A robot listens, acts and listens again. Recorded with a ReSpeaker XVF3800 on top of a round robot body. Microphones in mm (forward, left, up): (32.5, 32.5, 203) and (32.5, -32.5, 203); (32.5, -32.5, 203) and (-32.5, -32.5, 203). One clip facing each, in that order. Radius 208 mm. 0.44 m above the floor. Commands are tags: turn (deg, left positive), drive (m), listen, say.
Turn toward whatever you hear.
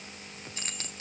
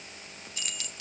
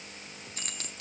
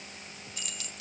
<turn deg="40"/>
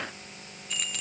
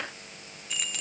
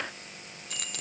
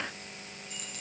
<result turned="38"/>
<say>Found it: keys jangling, straight ahead.</say>